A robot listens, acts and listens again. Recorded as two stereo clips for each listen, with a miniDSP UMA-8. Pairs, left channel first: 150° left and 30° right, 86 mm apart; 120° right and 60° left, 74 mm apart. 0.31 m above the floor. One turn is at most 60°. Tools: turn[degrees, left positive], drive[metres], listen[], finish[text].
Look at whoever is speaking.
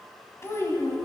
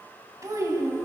Thought: The child speaking: 95° left.
Action: turn[60]
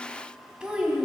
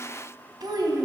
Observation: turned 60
Thought: The child speaking is now 50° left.
Action: turn[50]
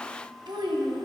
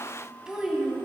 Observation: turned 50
Thought: The child speaking is now 20° right.
Action: turn[-20]
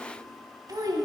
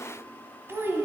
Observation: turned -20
Action: finish[Facing the child speaking.]